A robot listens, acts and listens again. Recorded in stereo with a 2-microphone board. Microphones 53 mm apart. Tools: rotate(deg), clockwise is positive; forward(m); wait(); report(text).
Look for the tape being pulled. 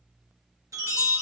wait()
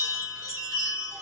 wait()
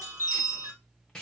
rotate(-30)
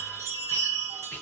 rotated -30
rotate(-135)
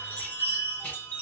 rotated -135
wait()
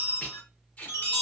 rotate(-40)
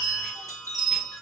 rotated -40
wait()
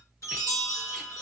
wait()
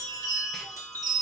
report("I heard tape being pulled from this way, but can't make it out now.")